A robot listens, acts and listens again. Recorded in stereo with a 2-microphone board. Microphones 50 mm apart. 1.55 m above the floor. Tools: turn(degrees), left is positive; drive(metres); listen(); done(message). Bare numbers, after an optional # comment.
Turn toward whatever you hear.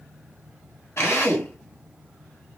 # The drill: about 55° left or 125° left.
turn(55)
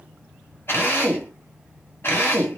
# So it is at 55° left.
turn(55)
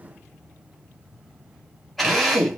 done("Found it: a drill, straight ahead.")